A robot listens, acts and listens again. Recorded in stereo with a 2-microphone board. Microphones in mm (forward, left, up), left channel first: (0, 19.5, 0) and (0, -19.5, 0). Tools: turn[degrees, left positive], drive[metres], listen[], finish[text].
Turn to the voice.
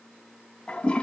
Action: listen[]
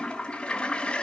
Action: listen[]
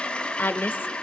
Thought: The woman speaking: about 60° left or 120° left.
Action: turn[60]
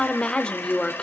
Thought: So it is at 25° left.
Action: turn[25]
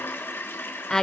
Thought: The woman speaking is now 10° left.
Action: turn[10]
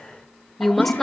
Action: finish[Found it: a woman speaking, straight ahead, 1 to 2 m away.]